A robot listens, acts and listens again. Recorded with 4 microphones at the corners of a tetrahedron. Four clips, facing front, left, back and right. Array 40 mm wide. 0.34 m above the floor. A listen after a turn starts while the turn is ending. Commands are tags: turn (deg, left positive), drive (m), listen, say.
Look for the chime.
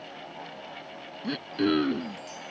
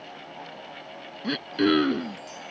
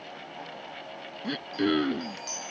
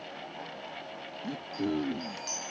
<turn deg="-135"/>
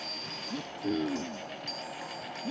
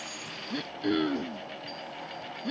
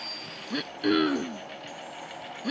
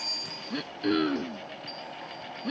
<listen/>
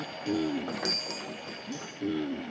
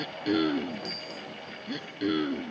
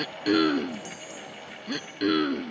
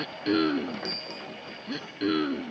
<turn deg="-25"/>
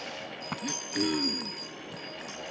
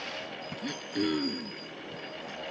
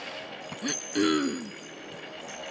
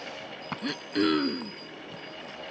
<say>Facing the chime.</say>